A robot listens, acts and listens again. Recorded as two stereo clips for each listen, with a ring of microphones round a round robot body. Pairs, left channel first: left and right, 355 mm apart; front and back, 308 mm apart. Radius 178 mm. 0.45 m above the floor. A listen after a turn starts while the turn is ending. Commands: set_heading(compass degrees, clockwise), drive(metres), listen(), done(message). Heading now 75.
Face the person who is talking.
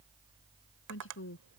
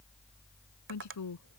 set_heading(45)
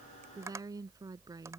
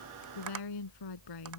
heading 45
set_heading(55)
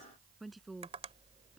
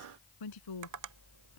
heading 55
done("Facing the woman speaking.")